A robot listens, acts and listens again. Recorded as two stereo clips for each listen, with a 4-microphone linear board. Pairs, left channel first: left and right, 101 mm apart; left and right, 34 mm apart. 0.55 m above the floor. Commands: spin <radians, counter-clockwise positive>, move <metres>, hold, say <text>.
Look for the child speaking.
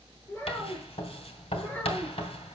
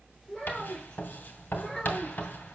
spin 0.26
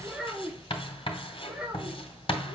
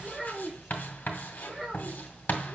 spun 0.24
spin -0.52
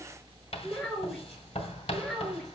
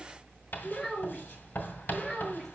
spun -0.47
say Facing the child speaking.